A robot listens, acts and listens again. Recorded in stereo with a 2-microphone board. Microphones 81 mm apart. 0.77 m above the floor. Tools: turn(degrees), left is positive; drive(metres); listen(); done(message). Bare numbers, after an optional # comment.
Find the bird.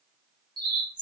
# The bird: about 70° right or 110° right.
turn(-70)
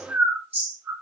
# So it is at 25° right.
turn(-25)
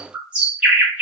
# The bird is now 15° right.
turn(-15)
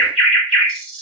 done("Found it: a bird, straight ahead.")